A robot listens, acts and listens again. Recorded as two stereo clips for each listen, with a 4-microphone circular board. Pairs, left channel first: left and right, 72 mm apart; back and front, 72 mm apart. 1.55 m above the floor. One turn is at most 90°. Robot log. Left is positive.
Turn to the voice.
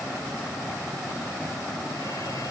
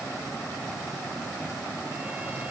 cmd idle
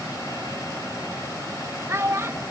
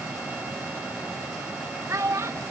note: The child speaking: 45° right.
cmd yaw -45
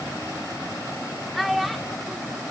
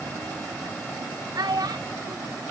end: Facing the child speaking.